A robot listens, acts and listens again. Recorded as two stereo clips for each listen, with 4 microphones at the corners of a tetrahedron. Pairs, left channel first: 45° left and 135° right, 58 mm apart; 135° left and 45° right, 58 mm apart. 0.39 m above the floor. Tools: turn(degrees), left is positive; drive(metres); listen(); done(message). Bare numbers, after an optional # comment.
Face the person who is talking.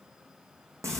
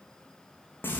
listen()
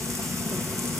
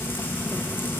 listen()
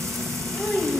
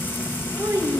# The child speaking: 45° right.
turn(-45)
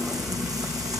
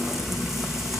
listen()
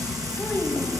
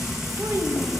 listen()
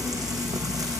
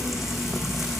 done("Facing where the child speaking came from. I can't hear it now.")